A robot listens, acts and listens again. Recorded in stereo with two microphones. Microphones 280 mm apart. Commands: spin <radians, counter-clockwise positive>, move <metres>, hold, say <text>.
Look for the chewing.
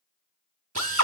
hold
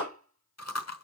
spin 1.05
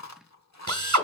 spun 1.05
spin 1.13
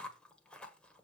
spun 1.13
say Facing the chewing, 1 to 2 m away.